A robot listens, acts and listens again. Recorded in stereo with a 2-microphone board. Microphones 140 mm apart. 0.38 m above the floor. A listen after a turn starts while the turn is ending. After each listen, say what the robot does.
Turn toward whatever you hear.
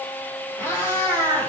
Turn 20° left.
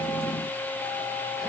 Keep listening.
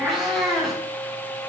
Found it: a cat meowing, straight ahead.